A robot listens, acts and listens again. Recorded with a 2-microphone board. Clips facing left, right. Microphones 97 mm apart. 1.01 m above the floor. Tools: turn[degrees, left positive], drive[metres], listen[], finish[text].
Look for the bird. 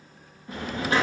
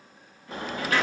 Thought: The bird: about 35° right or 145° right.
Action: turn[-35]
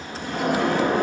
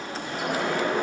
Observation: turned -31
Thought: So it is at 110° right.
Action: turn[-110]
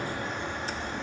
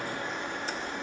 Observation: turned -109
Action: finish[Found it: a bird, straight ahead, 2 to 4 m away.]